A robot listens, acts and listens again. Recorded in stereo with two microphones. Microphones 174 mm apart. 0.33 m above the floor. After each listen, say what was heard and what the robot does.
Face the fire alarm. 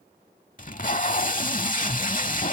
Keep listening.
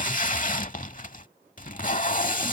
Keep listening.
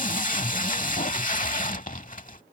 I can't make out a fire alarm, only tape being pulled.